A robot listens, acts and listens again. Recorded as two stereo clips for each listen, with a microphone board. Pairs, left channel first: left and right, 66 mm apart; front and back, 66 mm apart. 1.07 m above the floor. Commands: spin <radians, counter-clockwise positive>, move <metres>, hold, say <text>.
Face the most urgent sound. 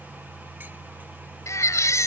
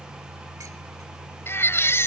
spin 0.87
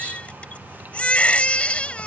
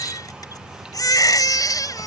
spin 0.35
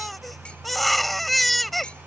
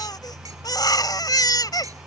say Facing the baby crying.